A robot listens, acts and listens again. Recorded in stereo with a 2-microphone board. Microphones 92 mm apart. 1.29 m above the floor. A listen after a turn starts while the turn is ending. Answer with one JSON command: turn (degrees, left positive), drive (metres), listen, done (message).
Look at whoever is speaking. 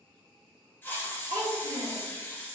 {"turn": -60}
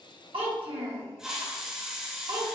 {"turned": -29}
{"turn": -90}
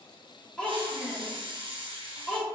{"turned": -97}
{"turn": 10}
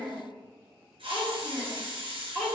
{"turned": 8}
{"done": "Facing the child speaking."}